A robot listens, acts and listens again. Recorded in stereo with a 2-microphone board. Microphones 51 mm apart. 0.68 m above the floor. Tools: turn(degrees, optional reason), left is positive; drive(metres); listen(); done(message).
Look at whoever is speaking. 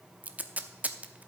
listen()
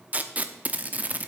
listen()
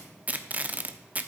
done("I can't make out anyone speaking to turn to.")